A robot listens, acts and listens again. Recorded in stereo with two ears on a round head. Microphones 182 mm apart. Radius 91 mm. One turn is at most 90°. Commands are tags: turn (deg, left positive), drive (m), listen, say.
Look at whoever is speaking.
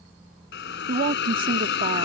<turn deg="-40"/>
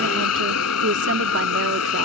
<listen/>
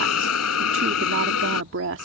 <turn deg="-90"/>
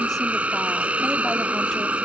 <listen/>
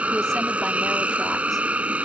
<listen/>
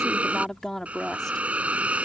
<say>Found it: a woman speaking, straight ahead.</say>